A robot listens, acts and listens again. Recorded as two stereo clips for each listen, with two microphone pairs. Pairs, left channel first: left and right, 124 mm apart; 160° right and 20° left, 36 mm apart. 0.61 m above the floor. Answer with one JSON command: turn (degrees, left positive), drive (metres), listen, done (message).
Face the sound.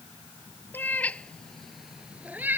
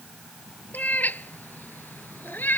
{"turn": -160}
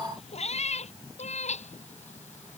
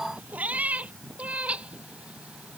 {"turn": 70}
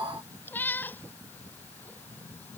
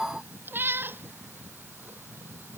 {"turn": 15}
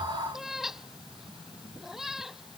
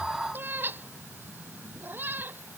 {"done": "Facing the cat meowing."}